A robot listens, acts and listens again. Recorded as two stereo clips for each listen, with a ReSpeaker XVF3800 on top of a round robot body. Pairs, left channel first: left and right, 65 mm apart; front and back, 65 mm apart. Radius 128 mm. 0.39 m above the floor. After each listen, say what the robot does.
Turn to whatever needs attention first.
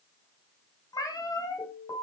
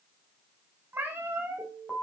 Turn 85° left.
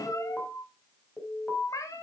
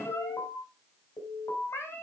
Turn 20° left.
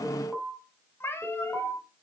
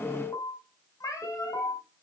Facing the alarm.